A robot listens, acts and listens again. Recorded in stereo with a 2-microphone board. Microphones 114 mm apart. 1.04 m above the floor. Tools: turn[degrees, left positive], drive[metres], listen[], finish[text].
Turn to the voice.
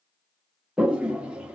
Action: listen[]
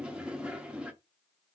Action: listen[]
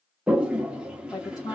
Thought: The woman speaking: about 35° left or 145° left.
Action: turn[35]
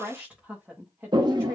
Thought: So it is at 25° right.
Action: turn[-25]
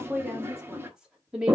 Thought: The woman speaking is now 10° right.
Action: turn[-10]
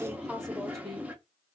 Action: finish[Facing the woman speaking, 1 to 2 m away.]